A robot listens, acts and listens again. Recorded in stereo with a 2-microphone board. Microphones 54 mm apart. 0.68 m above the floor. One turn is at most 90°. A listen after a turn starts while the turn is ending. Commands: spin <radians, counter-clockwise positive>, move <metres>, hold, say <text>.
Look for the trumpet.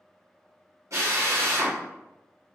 hold
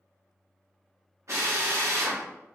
hold
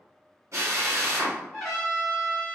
spin 0.52
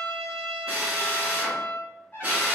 spin 1.57
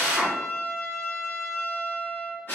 spin 1.05
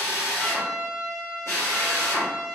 spin -0.26
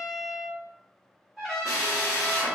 say Facing the trumpet.